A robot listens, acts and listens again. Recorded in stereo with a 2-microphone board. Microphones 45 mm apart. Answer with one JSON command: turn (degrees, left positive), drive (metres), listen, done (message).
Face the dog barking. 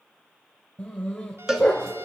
{"turn": 30}
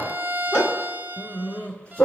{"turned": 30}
{"turn": 25}
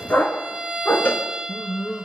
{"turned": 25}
{"turn": 25}
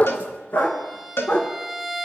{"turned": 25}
{"turn": 140}
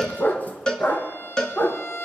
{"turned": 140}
{"turn": 40}
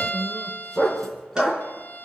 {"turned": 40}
{"done": "Found it: a dog barking, straight ahead."}